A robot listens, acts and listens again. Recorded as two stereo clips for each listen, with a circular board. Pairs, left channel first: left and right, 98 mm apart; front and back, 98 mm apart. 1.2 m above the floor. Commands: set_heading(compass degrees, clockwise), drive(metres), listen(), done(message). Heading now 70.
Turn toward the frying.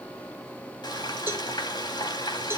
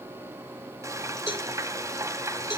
set_heading(305)
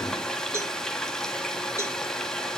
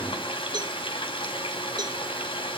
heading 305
done("Found it: frying, straight ahead.")